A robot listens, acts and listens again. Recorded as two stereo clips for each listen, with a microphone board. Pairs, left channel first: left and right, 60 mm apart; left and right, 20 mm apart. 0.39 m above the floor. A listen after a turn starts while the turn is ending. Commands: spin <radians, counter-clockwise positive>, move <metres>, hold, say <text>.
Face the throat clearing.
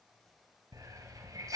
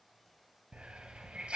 hold
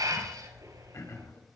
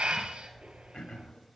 spin 0.96
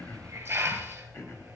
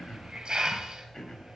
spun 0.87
hold
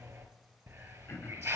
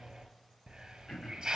hold
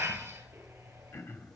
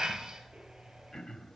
spin 1.05
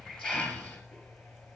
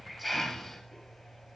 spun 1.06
hold
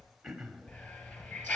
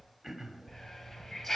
say Facing the throat clearing, 1 to 2 m away.